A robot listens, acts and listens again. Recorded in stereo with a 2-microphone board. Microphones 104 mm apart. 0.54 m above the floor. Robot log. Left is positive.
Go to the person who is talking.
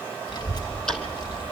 note: The child speaking: about 45° left or 135° left.
cmd yaw +45
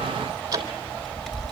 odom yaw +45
cmd fwd 1.0
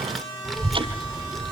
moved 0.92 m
cmd fwd 1.0
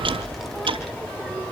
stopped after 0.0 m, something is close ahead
end: I am next to the child speaking.